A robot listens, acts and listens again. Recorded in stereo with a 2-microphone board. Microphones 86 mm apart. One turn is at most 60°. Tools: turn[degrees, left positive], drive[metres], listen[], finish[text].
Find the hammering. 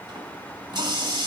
Action: listen[]
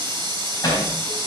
Thought: The hammering: about 45° left or 135° left.
Action: turn[45]
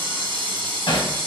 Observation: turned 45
Thought: So it is at 90° left.
Action: turn[60]
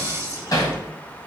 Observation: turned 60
Thought: The hammering is now 45° left.
Action: turn[45]
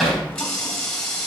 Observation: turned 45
Action: finish[Facing the hammering, 2 to 4 m away.]